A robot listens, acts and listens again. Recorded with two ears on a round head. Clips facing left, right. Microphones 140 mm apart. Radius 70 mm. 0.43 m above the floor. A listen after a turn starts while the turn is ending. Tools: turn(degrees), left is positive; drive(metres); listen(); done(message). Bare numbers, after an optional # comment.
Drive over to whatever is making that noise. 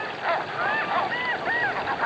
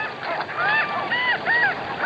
listen()
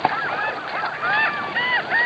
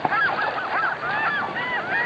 listen()
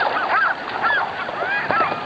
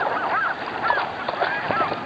done("I can't make out anything to turn to.")